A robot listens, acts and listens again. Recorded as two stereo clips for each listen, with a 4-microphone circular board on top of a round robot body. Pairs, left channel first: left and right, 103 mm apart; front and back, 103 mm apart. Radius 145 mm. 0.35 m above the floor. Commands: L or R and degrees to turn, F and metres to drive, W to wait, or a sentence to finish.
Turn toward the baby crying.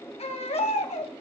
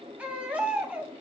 L100
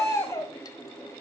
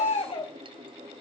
L30
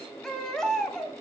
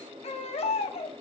Facing the baby crying.